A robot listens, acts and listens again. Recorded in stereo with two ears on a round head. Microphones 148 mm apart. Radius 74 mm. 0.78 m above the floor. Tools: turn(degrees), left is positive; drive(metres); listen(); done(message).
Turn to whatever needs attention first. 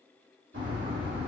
listen()
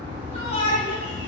turn(degrees=40)
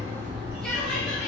listen()
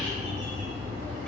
listen()
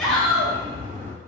done("Facing the shout, 1 to 2 m away.")